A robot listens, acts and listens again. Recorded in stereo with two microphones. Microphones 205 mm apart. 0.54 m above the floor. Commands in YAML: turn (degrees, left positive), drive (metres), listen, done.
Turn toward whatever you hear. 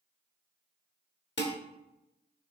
turn: 60
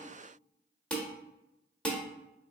done: "Found it: dishes clattering, straight ahead, 1 to 2 m away."